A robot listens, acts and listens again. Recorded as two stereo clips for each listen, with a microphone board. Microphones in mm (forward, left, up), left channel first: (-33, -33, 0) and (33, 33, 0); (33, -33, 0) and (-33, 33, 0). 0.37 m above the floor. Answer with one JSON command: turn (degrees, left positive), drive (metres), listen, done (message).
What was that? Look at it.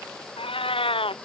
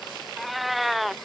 {"turn": -140}
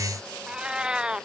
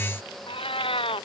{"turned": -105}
{"turn": -35}
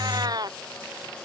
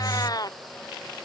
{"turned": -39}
{"done": "Facing the cat meowing."}